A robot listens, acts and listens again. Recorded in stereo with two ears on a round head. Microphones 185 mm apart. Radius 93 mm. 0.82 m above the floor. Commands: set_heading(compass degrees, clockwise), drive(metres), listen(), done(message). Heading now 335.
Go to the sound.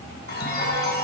set_heading(285)
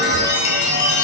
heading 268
set_heading(208)
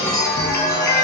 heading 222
set_heading(207)
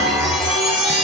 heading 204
drive(1.0)
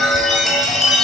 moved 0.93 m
drive(1.0)
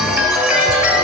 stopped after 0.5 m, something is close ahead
done("Arrived at the chime, straight ahead.")